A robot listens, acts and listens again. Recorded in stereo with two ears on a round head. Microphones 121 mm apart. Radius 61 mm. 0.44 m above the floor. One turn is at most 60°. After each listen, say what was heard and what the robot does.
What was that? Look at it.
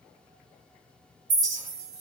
The clink: about 40° right or 140° right. Turn 40° right.
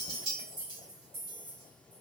So it is at 95° right. Turn 60° right.
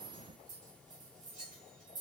The clink is now 65° right. Turn 60° right.
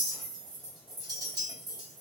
The clink is now 30° right. Turn 30° right.
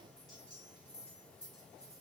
Keep listening.
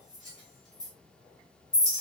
Found it: a clink, straight ahead.